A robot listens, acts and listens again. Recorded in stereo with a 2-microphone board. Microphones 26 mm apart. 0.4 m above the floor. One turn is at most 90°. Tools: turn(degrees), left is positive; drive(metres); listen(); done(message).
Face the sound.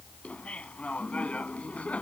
turn(degrees=65)
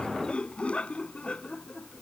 turn(degrees=50)
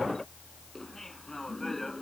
turn(degrees=10)
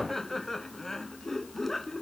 turn(degrees=10)
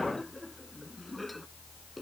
done("Found it: laughter, straight ahead.")